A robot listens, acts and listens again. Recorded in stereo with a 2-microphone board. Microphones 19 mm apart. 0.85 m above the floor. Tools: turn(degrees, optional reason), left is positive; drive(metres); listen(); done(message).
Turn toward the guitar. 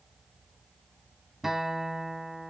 turn(degrees=-25, reason="The guitar: about 25° right or 155° right.")
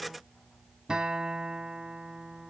turn(degrees=-130, reason="So it is at 130° right.")
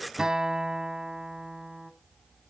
turn(degrees=-35, reason="The guitar is now 35° right.")
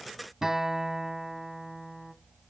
turn(degrees=-20, reason="The guitar is now 20° right.")
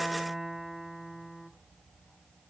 done("Found it: a guitar, straight ahead, 1 to 2 m away.")